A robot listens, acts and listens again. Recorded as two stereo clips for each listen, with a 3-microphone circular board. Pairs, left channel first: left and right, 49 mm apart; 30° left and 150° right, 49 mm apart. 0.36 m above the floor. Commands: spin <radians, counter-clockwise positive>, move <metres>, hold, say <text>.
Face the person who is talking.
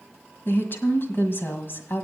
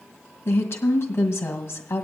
spin 0.87
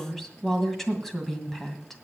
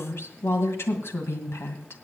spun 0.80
say Facing the woman speaking.